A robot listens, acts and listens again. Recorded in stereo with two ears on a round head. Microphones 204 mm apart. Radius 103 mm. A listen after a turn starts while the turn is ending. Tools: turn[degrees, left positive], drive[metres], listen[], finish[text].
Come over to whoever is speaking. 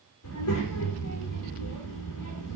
Action: turn[90]
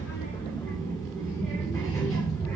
Action: drive[1.0]
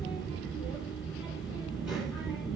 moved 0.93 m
Action: drive[1.0]
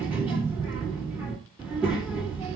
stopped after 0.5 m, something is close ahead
Action: finish[I am next to the child speaking.]